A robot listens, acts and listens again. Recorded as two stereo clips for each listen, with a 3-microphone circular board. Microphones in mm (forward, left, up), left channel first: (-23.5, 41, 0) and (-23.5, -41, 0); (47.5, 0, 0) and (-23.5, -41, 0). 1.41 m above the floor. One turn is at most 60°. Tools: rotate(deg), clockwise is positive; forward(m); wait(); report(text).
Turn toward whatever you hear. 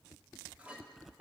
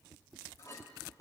rotate(15)
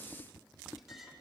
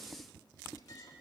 report("Found it: a clink, straight ahead.")